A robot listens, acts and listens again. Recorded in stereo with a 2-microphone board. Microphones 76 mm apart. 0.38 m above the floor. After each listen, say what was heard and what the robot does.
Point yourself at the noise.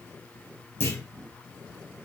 The clunk: about 35° left or 145° left. Turn 35° left.
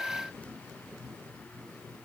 Keep listening.
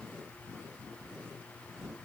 I heard a clunk, but can't make it out now. It was about straight ahead or 110° left.